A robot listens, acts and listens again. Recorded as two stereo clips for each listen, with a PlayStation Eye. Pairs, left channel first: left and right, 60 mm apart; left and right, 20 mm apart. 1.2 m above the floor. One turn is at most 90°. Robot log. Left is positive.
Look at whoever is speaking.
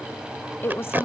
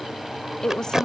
note: The woman speaking: about 40° left or 140° left.
cmd yaw +40
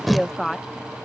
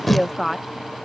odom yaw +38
end: Facing the woman speaking.